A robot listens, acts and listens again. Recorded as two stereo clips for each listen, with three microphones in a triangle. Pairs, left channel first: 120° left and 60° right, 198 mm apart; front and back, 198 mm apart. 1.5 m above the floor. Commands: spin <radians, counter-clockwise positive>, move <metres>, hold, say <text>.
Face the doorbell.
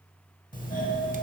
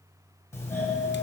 spin 1.31
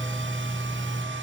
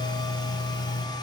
spin 0.52
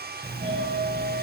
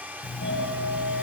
say Found it: a doorbell, straight ahead.